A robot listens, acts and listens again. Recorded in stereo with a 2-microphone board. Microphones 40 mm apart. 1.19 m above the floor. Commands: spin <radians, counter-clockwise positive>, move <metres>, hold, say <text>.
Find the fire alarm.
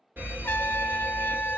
spin -0.96
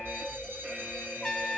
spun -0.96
spin -0.87
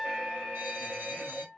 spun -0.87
spin -0.52
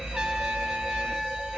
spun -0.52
spin -0.17
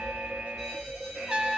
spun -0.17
say Facing the fire alarm, 2 to 4 m away.